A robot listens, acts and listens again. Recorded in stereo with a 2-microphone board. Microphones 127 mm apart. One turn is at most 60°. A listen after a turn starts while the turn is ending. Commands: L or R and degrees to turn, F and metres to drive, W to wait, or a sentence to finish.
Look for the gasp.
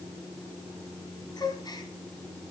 L30
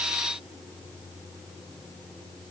W
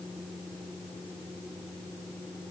I heard a gasp, but can't make it out now. It was about straight ahead or 120° left.